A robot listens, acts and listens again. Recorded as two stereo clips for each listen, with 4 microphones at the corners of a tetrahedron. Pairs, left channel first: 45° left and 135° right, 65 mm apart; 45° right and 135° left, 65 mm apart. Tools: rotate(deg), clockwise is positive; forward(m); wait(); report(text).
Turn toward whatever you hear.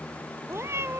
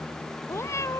rotate(85)
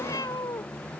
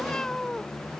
rotate(-40)
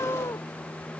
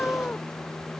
wait()
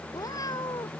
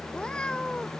rotate(-35)
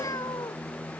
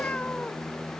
wait()
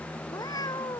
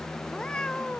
rotate(-30)
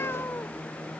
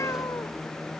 wait()
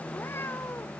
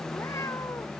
wait()
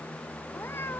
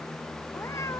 report("I heard a cat meowing from this way, but can't make it out now.")